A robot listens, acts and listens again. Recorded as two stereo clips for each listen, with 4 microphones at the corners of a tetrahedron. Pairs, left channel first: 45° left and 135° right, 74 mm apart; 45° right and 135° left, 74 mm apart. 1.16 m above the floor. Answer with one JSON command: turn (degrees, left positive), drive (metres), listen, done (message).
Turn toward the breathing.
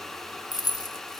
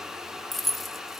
{"listen": true}
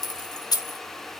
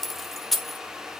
{"listen": true}
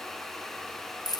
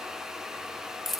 {"done": "I can't make out breathing, only keys jangling."}